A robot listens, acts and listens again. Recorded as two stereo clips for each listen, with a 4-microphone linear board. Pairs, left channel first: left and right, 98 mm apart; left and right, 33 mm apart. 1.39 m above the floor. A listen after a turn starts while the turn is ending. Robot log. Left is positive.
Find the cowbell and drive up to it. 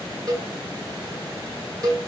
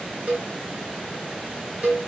note: The cowbell: about 40° right or 140° right.
cmd yaw -40
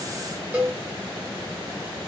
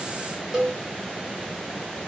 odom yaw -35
note: So it is at 10° right.
cmd yaw -10
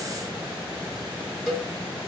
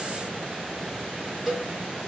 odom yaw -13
cmd fwd 1.0
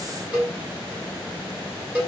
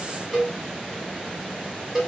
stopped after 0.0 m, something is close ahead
note: The cowbell is now 10° right.
cmd yaw -10
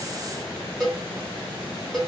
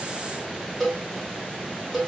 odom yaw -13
end: Blocked. The cowbell is further on, straight ahead.